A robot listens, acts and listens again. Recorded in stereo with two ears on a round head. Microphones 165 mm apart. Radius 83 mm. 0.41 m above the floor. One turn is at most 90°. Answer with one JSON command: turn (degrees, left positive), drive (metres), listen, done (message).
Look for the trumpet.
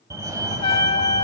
{"turn": 30}
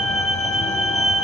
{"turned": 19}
{"listen": true}
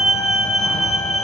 {"listen": true}
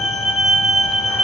{"done": "I heard a trumpet, but can't make it out now. It was about 10° left or 130° left."}